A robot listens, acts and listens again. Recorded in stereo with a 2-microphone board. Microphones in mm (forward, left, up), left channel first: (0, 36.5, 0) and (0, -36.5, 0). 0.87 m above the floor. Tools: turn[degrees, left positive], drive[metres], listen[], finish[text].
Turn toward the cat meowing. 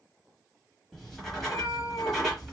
Thought: The cat meowing: about 45° left or 135° left.
Action: turn[45]
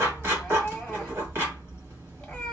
Action: listen[]
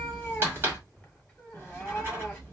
Thought: So it is at 10° left.
Action: turn[10]
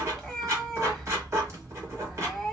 Action: finish[Facing the cat meowing.]